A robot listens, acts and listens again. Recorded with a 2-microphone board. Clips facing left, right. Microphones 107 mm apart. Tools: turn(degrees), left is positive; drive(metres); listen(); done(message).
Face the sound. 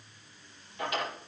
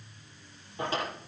turn(degrees=-30)
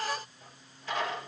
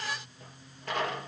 turn(degrees=-115)
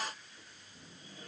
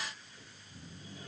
listen()
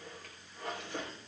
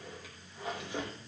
done("Found it: a drawer, straight ahead, over 4 m away.")